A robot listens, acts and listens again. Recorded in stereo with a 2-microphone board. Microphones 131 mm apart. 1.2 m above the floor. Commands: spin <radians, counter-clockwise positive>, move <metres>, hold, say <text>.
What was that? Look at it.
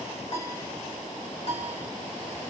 spin 0.87
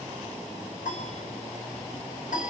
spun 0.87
spin 1.40
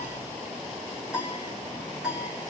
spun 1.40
spin -0.17
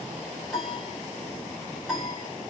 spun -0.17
say Found it: a piano, straight ahead, 1 to 2 m away.